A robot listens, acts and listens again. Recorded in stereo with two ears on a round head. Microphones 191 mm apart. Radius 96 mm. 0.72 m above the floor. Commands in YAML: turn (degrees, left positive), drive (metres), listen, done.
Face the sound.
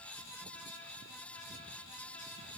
listen: true
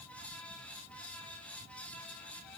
listen: true
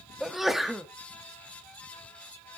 turn: 30
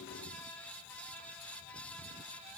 listen: true
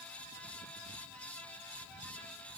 done: "I heard a sneeze, but can't make it out now. It was about 30° right or 150° left."